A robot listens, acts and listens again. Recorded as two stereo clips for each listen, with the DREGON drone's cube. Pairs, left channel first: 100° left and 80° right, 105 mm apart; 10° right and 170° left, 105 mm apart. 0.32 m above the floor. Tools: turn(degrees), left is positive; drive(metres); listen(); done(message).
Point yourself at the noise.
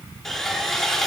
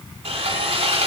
turn(degrees=-170)
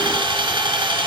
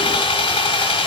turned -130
turn(degrees=-40)
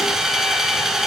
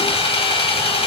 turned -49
turn(degrees=10)
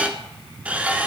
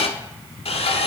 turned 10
done("Facing the sawing.")